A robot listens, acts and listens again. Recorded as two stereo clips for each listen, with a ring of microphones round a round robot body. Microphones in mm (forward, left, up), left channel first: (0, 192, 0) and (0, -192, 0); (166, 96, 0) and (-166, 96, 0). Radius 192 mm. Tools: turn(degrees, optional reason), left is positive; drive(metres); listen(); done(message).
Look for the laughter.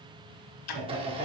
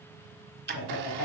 turn(degrees=-20, reason="The laughter: 20° right.")
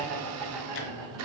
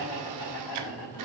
turn(degrees=-10, reason="The laughter is now 10° right.")
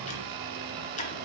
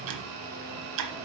listen()
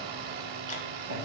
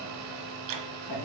turn(degrees=-25, reason="The laughter is now 25° right.")
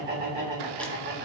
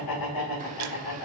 turn(degrees=-25, reason="The laughter is now 25° right.")
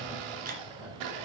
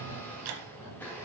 listen()
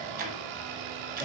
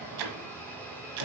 listen()
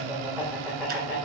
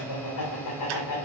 done("Facing the laughter.")